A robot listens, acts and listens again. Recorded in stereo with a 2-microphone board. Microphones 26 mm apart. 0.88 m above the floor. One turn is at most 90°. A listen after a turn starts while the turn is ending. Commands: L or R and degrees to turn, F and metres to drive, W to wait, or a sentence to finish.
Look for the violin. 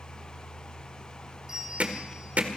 W
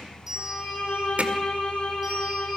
L90
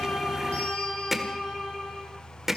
Facing the violin.